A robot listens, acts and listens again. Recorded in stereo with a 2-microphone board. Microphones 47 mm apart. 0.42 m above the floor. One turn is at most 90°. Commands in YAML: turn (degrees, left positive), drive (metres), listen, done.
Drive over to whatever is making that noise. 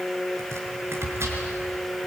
turn: -70
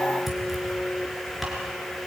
drive: 1.0
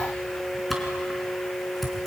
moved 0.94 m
drive: 1.0
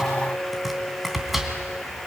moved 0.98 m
drive: 1.0
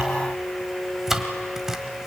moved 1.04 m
turn: -10
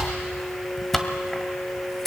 drive: 1.0
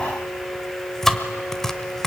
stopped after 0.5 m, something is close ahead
turn: 10
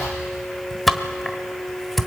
done: "I am next to the chopping."